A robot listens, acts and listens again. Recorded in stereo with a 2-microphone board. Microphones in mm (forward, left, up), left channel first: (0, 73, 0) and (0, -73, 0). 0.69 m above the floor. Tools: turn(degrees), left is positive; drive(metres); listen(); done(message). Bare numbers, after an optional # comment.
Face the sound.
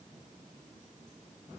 listen()
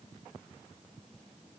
listen()
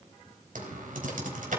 turn(-90)
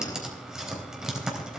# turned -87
done("Found it: typing on a keyboard, straight ahead.")